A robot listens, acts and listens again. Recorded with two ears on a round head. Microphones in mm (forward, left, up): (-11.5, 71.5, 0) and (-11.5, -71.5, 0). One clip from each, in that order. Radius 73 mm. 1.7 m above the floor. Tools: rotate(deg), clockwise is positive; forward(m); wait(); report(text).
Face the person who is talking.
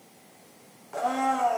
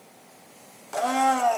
wait()
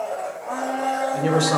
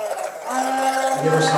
rotate(-20)
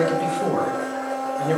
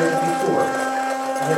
rotate(-140)
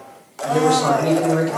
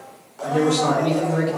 rotate(-10)
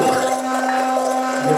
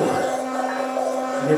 report("Found it: a man speaking, straight ahead, 2 to 4 m away.")